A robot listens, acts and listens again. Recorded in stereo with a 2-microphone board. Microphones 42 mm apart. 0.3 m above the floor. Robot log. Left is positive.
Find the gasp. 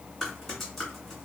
cmd idle
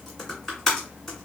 cmd idle
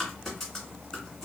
end: I can't make out a gasp, only typing on a keyboard.